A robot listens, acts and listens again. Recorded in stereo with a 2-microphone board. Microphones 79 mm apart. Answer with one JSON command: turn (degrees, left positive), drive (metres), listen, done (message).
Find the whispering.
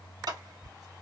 {"turn": -50}
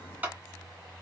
{"listen": true}
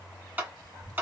{"turn": -70}
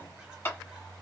{"listen": true}
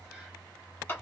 {"listen": true}
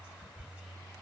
{"turn": -15}
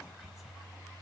{"listen": true}
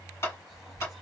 {"listen": true}
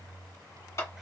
{"done": "I heard whispering from this way, but can't make it out now."}